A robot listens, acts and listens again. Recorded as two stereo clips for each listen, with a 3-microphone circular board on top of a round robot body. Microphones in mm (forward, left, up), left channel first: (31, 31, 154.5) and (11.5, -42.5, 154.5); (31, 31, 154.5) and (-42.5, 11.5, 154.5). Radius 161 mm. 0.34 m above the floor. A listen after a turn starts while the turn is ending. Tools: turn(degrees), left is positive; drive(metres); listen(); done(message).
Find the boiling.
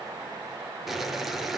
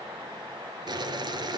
turn(degrees=165)
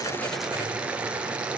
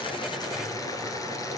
turn(degrees=-30)
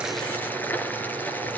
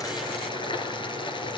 done("Found it: boiling, straight ahead, 1 to 2 m away.")